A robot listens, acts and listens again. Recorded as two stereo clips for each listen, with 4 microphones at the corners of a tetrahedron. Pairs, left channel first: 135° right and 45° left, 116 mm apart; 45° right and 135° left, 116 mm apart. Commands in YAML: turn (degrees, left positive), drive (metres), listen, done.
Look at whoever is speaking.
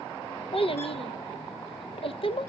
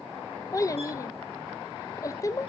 turn: -105
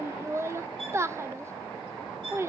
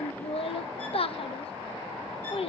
turn: -20
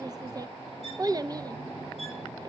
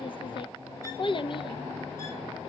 turn: -10
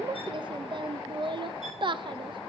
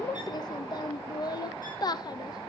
done: "Facing the child speaking, under 1 m away."